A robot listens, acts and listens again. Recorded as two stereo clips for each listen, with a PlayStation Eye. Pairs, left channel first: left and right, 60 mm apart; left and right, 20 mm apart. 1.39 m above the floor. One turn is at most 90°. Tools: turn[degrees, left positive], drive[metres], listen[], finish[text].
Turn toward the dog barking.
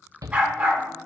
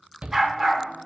Thought: The dog barking: about 15° right or 165° right.
Action: turn[-15]
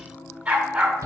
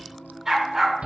Thought: The dog barking: about 20° right or 160° right.
Action: turn[-20]
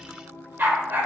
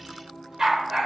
Thought: The dog barking: about 35° right or 145° right.
Action: turn[-35]
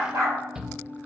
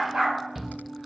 Thought: So it is at 115° right.
Action: turn[-90]
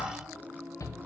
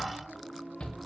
Thought: Nothing new. It was at 25° right.
Action: turn[-25]
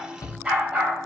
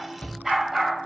Thought: The dog barking is now 20° right.
Action: turn[-20]
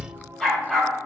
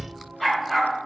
Action: finish[Facing the dog barking, 2 to 4 m away.]